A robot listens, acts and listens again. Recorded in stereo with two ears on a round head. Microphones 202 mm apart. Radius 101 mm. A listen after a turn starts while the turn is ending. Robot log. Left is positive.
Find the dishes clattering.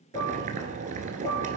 note: The dishes clattering: about 25° left or 155° left.
cmd yaw +25
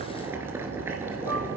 cmd idle
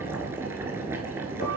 cmd idle
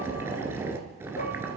note: So it is at 130° left.
cmd yaw +130
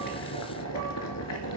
cmd idle
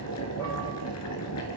cmd idle
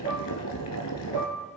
note: The dishes clattering is now 20° left.
cmd yaw +20
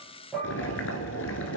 end: Found it: dishes clattering, straight ahead.